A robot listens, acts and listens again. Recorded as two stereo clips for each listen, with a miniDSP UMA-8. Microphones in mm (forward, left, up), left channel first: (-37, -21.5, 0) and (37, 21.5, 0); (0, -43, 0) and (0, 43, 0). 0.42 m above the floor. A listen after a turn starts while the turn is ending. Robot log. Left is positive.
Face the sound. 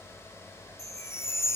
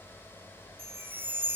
note: The chime: 155° left.
cmd yaw +155
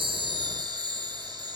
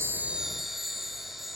end: Found it: a chime, straight ahead.